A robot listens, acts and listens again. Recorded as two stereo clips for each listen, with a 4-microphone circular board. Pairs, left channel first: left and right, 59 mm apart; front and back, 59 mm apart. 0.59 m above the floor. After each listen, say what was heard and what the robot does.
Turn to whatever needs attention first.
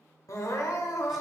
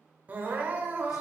The crying: 120° left. Turn 120° left.
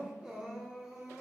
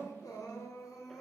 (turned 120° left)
The crying is now 10° right. Turn 10° right.
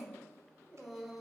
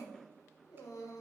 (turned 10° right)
Found it: crying, straight ahead, under 1 m away.